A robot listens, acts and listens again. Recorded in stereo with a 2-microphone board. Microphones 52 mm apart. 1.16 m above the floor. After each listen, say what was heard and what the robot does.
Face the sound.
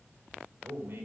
The man speaking: about 50° right or 130° right. Turn 50° right.
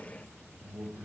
So it is at 85° right. Turn 85° right.
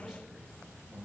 The man speaking is now 15° right. Turn 15° right.
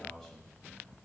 Found it: a man speaking, straight ahead, over 4 m away.